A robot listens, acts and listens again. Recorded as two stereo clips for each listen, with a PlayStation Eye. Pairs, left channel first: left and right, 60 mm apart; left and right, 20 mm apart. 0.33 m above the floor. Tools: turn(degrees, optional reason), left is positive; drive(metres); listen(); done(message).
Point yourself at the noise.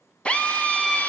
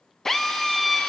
turn(degrees=20, reason="The drill: about 20° left or 160° left.")
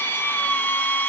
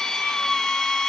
turn(degrees=140, reason="So it is at 140° left.")
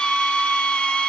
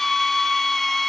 turn(degrees=20, reason="The drill is now 20° left.")
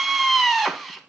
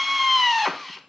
done("Found it: a drill, straight ahead.")